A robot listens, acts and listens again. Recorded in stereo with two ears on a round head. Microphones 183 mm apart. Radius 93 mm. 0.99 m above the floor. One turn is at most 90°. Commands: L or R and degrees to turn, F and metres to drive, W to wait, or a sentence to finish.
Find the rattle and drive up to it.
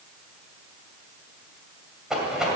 R30
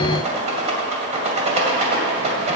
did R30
R90
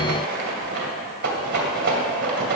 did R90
R50
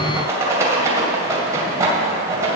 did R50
R15
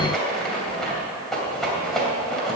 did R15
F1.0
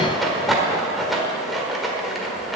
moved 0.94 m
F1.0
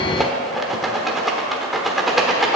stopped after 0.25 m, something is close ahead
I am next to the rattle.